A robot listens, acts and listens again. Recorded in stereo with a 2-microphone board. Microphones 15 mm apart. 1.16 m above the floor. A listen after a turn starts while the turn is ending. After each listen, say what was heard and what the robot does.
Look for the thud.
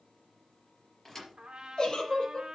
The thud: about 20° left or 160° left. Turn 20° left.
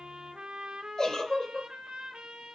Keep listening.
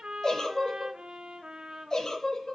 I heard a thud, but can't make it out now. It was about straight ahead or 140° left.